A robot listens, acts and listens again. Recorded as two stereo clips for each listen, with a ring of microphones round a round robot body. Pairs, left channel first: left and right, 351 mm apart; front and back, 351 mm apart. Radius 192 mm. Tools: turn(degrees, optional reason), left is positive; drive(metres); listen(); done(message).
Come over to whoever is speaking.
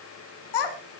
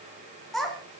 turn(degrees=90, reason="The child speaking: 90° left.")
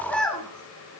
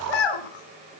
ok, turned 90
drive(metres=1.0)
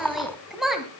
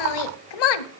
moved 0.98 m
drive(metres=1.0)
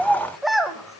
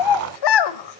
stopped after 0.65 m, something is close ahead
done("Arrived at the child speaking, straight ahead.")